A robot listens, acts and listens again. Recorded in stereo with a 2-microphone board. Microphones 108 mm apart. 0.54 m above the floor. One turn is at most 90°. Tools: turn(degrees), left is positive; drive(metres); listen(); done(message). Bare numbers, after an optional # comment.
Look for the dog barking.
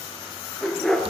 turn(30)
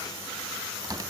listen()
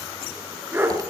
# So it is at 20° right.
turn(-20)
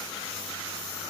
listen()
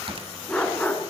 # The dog barking is now 15° left.
turn(15)
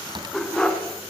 # The dog barking is now 10° left.
turn(10)
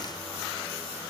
listen()
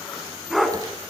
done("Facing the dog barking.")